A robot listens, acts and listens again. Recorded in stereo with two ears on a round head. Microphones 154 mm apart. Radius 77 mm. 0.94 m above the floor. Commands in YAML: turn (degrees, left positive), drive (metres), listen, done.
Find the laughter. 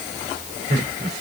turn: -65
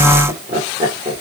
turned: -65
turn: -35
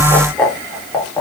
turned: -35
turn: 15
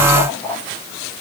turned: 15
turn: 10
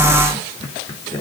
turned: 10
turn: 20
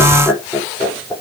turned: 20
done: "Facing the laughter, 2 to 4 m away."